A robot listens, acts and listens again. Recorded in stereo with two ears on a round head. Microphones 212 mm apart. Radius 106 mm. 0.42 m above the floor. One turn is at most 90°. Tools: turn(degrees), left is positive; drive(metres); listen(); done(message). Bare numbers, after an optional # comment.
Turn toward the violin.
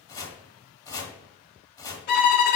# The violin: about 45° left or 135° left.
turn(45)
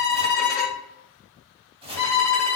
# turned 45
# So it is at 15° left.
turn(15)
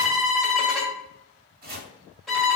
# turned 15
done("Found it: a violin, straight ahead.")